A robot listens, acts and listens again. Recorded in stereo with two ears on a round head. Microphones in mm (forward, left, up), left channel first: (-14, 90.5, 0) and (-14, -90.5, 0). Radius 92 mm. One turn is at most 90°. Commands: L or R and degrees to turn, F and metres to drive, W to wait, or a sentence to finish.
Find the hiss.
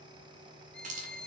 R35
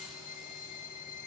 W
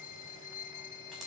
W
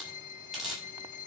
Found it: a hiss, straight ahead, over 4 m away.